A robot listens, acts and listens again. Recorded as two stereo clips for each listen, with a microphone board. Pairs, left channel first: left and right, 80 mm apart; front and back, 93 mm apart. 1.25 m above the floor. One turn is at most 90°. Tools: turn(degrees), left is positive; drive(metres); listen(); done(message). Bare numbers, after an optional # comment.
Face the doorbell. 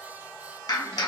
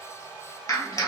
listen()
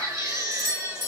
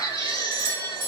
# The doorbell: 120° right.
turn(-90)
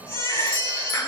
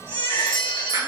# Nothing new. It was at 30° right.
turn(-30)
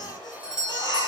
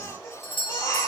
# The doorbell is now 10° right.
turn(-10)
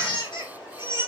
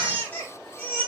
listen()
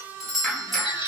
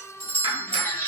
done("Facing the doorbell.")